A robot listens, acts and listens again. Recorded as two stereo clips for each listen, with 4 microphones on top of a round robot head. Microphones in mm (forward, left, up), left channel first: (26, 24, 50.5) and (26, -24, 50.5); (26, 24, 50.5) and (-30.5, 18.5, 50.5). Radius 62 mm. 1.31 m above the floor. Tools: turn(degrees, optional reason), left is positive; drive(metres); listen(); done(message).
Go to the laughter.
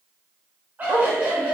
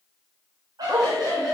turn(degrees=-155, reason="The laughter: 155° right.")
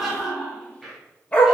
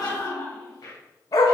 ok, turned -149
drive(metres=1.0)
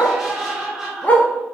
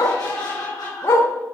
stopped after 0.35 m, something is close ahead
turn(degrees=-10, reason="The laughter is now 10° right.")
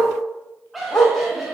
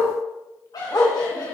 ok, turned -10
done("Something is in my way. I am facing the laughter but have not reached it.")